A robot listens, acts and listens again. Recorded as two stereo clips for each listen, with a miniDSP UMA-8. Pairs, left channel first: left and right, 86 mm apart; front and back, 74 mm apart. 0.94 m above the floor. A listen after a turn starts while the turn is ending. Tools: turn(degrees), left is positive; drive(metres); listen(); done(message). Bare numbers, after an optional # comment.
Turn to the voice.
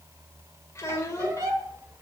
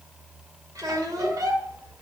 # The child speaking: 145° left.
turn(145)
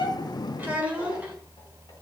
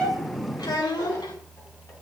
# The child speaking is now 20° right.
turn(-20)
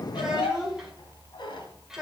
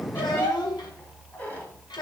done("Found it: a child speaking, straight ahead, 2 to 4 m away.")